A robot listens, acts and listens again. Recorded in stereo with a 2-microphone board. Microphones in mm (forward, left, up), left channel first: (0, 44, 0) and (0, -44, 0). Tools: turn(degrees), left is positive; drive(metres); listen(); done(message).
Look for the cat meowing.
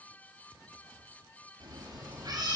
turn(degrees=-50)
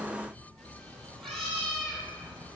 turn(degrees=10)
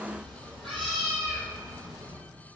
done("Facing the cat meowing, 2 to 4 m away.")